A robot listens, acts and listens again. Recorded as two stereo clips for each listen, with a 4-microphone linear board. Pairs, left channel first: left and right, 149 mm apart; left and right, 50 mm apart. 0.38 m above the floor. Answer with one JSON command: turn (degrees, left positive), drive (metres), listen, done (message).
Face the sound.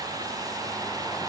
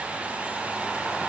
{"listen": true}
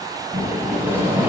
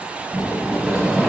{"turn": -30}
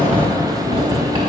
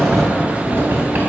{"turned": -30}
{"turn": -140}
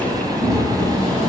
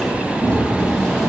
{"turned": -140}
{"done": "Found it: a sliding door, straight ahead."}